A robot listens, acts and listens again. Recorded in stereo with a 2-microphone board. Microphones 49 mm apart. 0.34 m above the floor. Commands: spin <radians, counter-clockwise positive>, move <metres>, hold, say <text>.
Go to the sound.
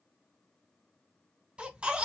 spin -0.35
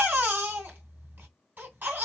spin -2.36
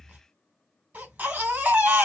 spin -0.79
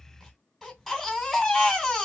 move 1.0
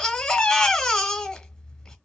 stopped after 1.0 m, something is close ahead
spin 0.26
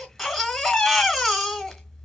say I am next to the baby crying.